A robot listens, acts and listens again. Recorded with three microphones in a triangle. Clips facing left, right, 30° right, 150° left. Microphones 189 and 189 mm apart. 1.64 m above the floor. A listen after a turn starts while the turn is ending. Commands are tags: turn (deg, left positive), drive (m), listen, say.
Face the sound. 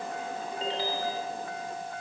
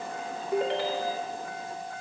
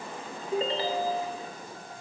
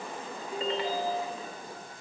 <turn deg="-85"/>
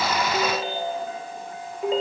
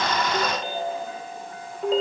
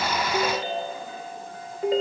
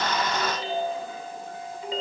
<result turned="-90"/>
<say>Facing the ringtone.</say>